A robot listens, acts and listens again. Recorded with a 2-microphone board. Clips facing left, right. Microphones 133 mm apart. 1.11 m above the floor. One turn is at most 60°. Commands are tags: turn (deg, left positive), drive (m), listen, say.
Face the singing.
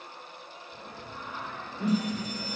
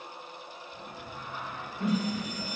<turn deg="60"/>
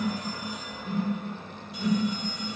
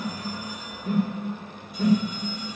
<turn deg="30"/>
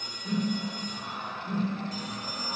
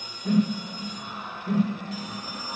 <turn deg="55"/>
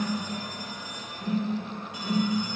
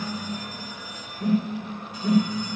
<listen/>
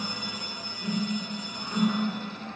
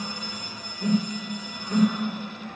<listen/>
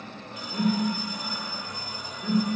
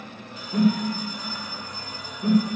<turn deg="35"/>
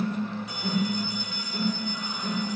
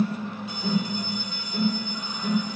<listen/>
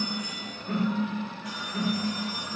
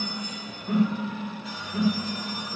<listen/>
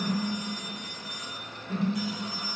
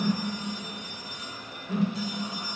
<say>Facing where the singing came from. I can't hear it now.</say>